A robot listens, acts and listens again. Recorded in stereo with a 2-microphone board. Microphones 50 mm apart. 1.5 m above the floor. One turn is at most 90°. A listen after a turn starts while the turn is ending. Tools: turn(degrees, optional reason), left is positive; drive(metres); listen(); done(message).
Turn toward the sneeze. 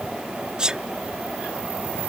turn(degrees=-15, reason="The sneeze: about 15° right or 165° right.")
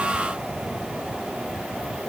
listen()
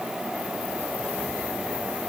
done("I heard a sneeze, but can't make it out now. It was about straight ahead or 150° right.")